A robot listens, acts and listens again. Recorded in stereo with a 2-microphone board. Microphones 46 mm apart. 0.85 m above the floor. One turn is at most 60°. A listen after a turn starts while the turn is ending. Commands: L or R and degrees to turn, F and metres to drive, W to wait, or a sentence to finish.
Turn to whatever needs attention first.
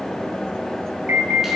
R45
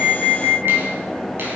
R60
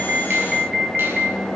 Facing the alarm, 2 to 4 m away.